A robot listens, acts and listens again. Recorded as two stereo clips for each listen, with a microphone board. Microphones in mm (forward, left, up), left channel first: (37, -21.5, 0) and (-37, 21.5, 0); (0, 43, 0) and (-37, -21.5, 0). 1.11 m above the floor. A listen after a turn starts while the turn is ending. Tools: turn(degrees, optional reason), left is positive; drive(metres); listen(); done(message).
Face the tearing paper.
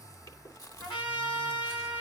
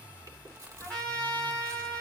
listen()
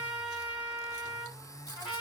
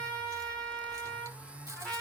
listen()
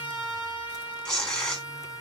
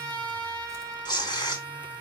turn(degrees=50, reason="The tearing paper: 50° left.")
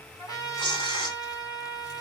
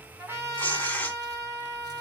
turn(degrees=-10, reason="The tearing paper is now 10° right.")
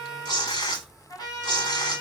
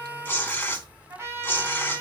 done("Found it: tearing paper, straight ahead, 2 to 4 m away.")